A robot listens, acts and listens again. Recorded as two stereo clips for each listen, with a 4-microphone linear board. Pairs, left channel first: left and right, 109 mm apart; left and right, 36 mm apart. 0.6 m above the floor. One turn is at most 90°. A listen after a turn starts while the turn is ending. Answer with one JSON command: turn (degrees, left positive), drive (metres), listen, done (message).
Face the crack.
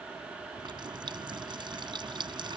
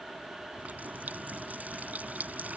{"listen": true}
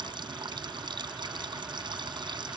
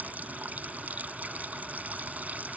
{"listen": true}
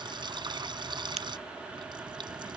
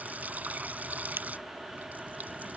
{"turn": -90}
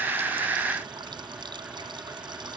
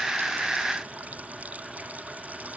{"done": "Facing where the crack came from. I can't hear it now."}